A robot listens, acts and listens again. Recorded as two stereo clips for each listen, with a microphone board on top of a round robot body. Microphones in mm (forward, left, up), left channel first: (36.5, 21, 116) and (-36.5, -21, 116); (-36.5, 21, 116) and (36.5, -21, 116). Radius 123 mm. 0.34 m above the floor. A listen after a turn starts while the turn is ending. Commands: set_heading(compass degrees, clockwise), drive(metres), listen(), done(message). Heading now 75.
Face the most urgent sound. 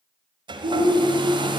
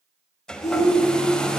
set_heading(235)
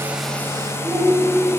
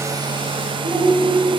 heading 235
set_heading(295)
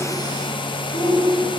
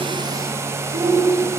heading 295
done("Found it: a shout, straight ahead, 2 to 4 m away.")